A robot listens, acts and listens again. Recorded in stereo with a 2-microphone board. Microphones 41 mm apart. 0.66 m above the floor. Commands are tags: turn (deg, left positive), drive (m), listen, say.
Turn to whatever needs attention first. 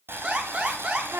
<turn deg="-40"/>
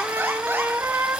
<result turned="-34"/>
<listen/>
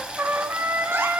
<listen/>
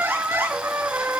<say>I heard an alarm, but can't make it out now. It was about 5° right or 105° right.</say>